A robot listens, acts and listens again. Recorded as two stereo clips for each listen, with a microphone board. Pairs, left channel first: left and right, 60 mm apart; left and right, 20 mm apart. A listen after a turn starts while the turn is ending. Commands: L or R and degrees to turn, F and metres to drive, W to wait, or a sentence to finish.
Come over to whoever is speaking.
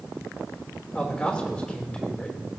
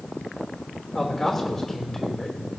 L20
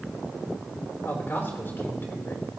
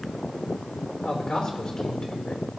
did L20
L140
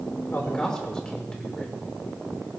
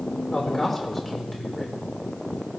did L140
L15
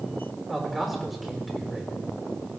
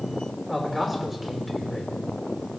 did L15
F1.0
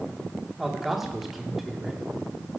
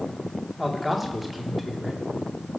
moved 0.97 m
F1.0
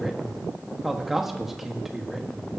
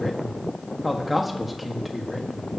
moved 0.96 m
F1.0
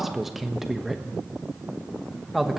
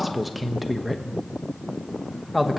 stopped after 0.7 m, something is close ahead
I am next to the man speaking.